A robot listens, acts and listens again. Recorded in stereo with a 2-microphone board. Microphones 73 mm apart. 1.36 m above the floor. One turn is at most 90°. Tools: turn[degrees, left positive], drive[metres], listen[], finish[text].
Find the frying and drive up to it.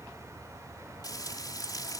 Thought: The frying: about 60° left or 120° left.
Action: turn[60]
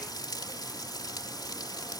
Thought: So it is at 65° left.
Action: turn[65]
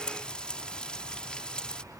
Thought: The frying is now 15° left.
Action: turn[15]
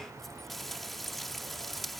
Action: drive[1.0]
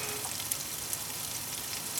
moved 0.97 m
Action: drive[1.0]
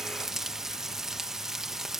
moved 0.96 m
Action: drive[1.0]
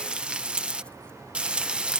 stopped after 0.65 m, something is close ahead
Thought: The frying is now 15° right.
Action: turn[-15]
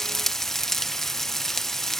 Action: finish[I am next to the frying.]